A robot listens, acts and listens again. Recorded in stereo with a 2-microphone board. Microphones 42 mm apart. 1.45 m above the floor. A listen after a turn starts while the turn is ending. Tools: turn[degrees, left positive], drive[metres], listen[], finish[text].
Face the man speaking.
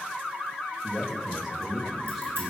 Action: turn[-30]
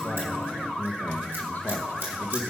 Thought: So it is at 55° left.
Action: turn[55]
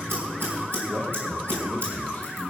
Thought: The man speaking is now 35° left.
Action: turn[35]
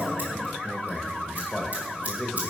Thought: The man speaking is now 10° left.
Action: turn[10]
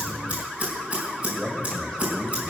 Action: finish[Found it: a man speaking, straight ahead.]